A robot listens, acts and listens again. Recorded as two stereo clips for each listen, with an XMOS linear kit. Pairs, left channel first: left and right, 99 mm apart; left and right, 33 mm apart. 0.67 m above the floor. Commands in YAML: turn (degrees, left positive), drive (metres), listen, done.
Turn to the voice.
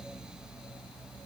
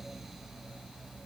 listen: true
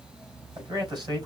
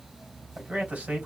turn: -45
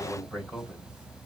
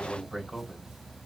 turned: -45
done: "Found it: a man speaking, straight ahead, 2 to 4 m away."